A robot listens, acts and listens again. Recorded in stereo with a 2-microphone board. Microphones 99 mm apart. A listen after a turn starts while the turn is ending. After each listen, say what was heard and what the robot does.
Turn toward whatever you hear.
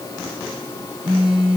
Turn 30° right.
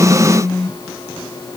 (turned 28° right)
So it is at 15° left. Turn 15° left.
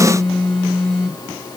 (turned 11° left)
Facing the phone buzzing.